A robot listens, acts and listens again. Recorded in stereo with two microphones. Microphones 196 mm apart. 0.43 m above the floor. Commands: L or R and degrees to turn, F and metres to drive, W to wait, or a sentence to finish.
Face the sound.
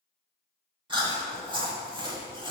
R25
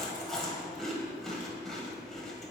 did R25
Facing the chewing.